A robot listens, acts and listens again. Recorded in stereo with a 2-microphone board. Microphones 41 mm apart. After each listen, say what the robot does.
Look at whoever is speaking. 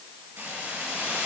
Keep listening.
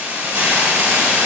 Keep listening.
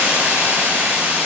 I can't make out anyone speaking, only a hiss.